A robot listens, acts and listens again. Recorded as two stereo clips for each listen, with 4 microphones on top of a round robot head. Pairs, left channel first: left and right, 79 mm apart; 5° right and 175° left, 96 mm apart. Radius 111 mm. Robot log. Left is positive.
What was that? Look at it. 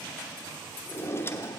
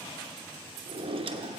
note: The drawer: 150° left.
cmd yaw +150
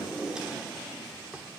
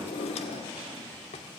note: The drawer is now 10° right.
cmd yaw -10
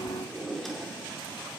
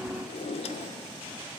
end: Facing the drawer.